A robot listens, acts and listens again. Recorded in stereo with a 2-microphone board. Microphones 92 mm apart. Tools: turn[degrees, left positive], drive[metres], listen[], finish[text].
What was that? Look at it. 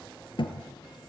Thought: The thud: about 60° left or 120° left.
Action: turn[60]
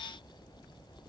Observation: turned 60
Action: listen[]
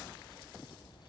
Action: finish[I heard a thud, but can't make it out now. It was about straight ahead or 60° left.]